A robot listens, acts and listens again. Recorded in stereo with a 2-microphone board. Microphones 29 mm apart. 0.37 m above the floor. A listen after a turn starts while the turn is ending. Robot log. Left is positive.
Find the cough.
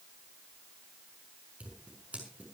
cmd idle
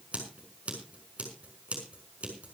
cmd idle
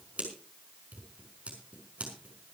end: I can't make out a cough to turn to.